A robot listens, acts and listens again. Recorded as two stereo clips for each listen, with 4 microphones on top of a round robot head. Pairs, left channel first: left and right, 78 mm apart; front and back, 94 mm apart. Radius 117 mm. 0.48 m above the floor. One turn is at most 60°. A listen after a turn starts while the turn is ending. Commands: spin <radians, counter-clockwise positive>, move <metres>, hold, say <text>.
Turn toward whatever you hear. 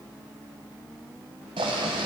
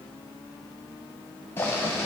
spin -1.05
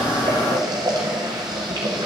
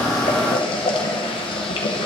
spin -0.70
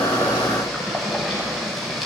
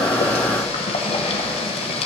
say Facing the boiling, under 1 m away.